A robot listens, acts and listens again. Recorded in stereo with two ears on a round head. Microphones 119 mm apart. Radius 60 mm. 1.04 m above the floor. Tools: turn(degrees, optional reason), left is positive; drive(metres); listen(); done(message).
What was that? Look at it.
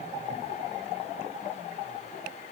listen()
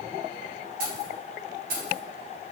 turn(degrees=-75, reason="The keys jangling: about 75° right or 105° right.")
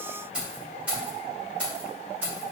turn(degrees=-15, reason="So it is at 15° right.")
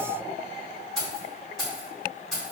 done("Found it: keys jangling, straight ahead, 2 to 4 m away.")